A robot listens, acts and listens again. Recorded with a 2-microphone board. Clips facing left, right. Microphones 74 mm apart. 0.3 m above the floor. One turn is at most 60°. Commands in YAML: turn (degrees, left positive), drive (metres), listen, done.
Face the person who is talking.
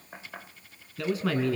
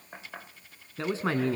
turn: -30
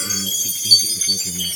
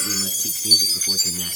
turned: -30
listen: true
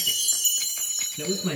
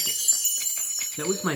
turn: -60
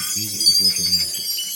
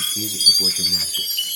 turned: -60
turn: -55
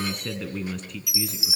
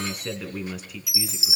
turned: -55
done: "Found it: a man speaking, straight ahead."